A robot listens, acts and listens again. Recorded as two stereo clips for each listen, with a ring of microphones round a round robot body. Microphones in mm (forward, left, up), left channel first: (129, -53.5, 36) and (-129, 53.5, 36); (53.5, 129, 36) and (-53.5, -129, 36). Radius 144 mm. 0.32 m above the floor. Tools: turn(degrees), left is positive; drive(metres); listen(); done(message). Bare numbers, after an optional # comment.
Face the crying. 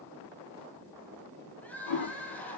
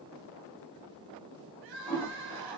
# The crying: 105° right.
turn(-105)
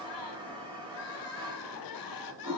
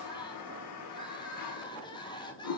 # The crying is now 10° right.
turn(-10)
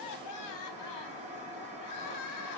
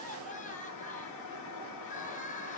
done("Facing the crying.")